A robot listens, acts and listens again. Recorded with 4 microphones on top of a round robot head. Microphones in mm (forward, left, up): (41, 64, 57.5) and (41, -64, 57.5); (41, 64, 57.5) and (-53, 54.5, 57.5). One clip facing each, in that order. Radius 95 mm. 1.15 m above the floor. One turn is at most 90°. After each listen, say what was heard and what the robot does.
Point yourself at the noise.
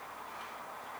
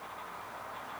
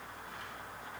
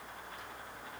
Keep listening.
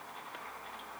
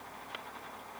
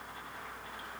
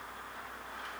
Keep listening.
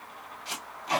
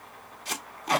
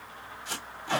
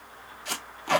The tape being pulled: 135° right. Turn 90° right.
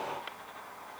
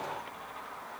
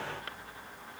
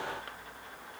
Nothing new. It was at 45° right. Turn 45° right.
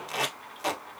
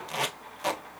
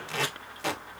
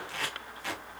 Facing the tape being pulled.